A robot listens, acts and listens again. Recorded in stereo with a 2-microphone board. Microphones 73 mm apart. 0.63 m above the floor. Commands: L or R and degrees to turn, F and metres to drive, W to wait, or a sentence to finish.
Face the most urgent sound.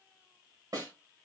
W
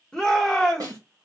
L30
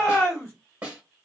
L140
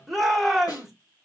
Facing the shout.